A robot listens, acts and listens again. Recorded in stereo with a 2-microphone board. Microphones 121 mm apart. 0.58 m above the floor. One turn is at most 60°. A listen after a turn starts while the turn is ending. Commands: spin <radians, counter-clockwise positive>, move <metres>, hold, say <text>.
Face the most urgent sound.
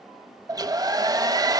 hold
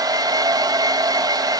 hold
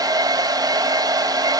say I can't make out anything urgent, only a hair dryer.